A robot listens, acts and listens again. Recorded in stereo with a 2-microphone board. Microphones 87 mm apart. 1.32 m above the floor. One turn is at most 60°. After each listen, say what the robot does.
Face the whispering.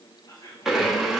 Turn 40° left.
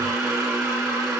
Keep listening.
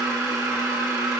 Keep listening.
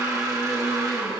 I heard whispering, but can't make it out now. It was about straight ahead or 100° left.